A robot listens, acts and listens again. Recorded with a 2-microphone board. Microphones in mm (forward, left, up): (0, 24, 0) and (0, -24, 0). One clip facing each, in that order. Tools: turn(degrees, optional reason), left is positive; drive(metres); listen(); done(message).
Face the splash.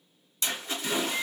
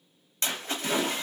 turn(degrees=-50, reason="The splash: about 50° right or 130° right.")
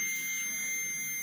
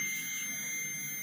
listen()
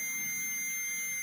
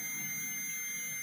done("I heard a splash, but can't make it out now. It was about straight ahead or 80° right.")